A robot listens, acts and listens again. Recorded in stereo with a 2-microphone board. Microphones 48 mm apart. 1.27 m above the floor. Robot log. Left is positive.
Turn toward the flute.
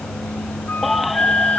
note: The flute: about 40° left or 140° left.
cmd yaw +40
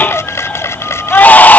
cmd idle
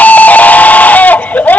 cmd idle
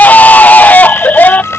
note: So it is at 10° left.
cmd yaw +10
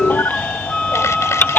end: Facing the flute.